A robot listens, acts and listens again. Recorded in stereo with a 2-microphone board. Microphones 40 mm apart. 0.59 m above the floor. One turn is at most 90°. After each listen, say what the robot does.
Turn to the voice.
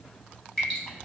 Keep listening.
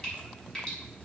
Keep listening.
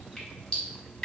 I can't make out anyone speaking, only dripping.